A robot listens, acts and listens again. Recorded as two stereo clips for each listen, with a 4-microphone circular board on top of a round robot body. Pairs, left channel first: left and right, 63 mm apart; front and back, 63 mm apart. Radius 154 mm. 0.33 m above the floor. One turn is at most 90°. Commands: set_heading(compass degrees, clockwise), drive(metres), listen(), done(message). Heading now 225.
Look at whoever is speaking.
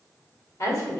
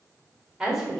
set_heading(135)
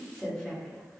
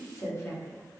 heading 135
set_heading(120)
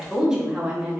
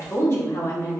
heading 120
set_heading(145)
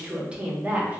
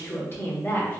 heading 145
set_heading(180)
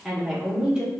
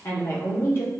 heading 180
set_heading(200)
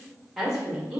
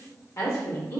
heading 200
set_heading(220)
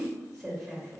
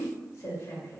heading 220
done("Facing the woman speaking, 1 to 2 m away.")